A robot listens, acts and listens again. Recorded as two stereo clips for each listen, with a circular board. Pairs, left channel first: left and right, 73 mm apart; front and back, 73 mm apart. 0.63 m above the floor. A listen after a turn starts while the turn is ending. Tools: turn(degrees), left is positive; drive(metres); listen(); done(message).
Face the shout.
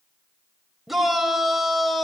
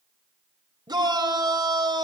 turn(degrees=180)
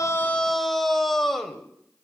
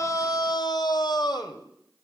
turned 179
done("Facing the shout, 2 to 4 m away.")